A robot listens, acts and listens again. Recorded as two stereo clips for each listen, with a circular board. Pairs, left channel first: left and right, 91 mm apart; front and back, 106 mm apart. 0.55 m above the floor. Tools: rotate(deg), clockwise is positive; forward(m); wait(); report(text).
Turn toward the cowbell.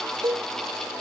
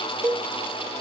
rotate(120)
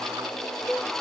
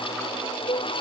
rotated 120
report("Facing the cowbell.")